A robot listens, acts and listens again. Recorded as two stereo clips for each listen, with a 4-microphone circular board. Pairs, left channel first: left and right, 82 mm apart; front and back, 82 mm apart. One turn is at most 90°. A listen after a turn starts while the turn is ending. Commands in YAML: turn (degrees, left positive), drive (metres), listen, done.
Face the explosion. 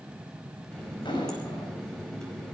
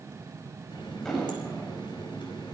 turn: 85
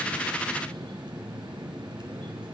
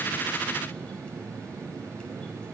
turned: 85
done: "Facing where the explosion came from. I can't hear it now."